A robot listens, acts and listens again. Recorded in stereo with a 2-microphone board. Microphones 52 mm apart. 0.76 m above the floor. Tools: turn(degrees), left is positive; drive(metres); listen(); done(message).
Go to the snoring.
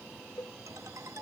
listen()
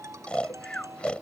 turn(degrees=20)
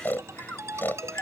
turn(degrees=140)
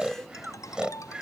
turn(degrees=-15)
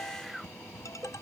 drive(metres=1.0)
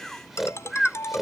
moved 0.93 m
drive(metres=1.0)
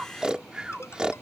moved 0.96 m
turn(degrees=-15)
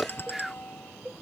drive(metres=1.0)
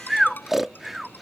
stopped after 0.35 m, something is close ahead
done("I am next to the snoring.")